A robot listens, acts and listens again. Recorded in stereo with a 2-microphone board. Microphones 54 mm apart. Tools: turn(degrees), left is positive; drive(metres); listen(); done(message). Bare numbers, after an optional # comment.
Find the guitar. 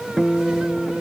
turn(30)
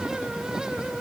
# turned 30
# So it is at 150° left.
turn(150)
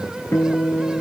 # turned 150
# The guitar is now 55° left.
turn(55)
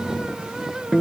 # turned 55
done("Found it: a guitar, straight ahead.")